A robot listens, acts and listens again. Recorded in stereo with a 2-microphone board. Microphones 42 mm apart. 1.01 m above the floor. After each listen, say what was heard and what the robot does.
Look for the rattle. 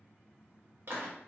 Keep listening.
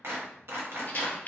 The rattle: about 40° left or 140° left. Turn 40° left.
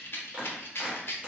So it is at 90° left. Turn 90° left.
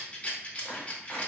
The rattle is now 35° left. Turn 35° left.
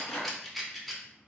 Facing the rattle.